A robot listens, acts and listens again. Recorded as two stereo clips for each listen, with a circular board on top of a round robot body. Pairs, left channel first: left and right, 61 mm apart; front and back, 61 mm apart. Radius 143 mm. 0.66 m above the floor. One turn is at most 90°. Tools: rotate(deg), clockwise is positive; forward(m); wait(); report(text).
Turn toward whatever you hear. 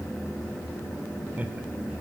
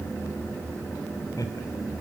rotate(25)
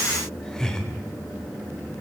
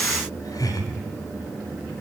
rotate(-10)
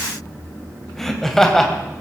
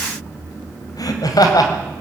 report("Facing the laughter, over 4 m away.")